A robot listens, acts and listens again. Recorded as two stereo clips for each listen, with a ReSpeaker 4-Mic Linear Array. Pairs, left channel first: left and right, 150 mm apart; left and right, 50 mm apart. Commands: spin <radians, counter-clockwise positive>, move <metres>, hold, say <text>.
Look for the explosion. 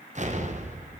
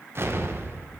spin -0.96
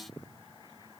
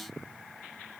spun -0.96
hold
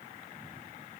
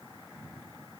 say I heard an explosion, but can't make it out now. It was about straight ahead or 70° right.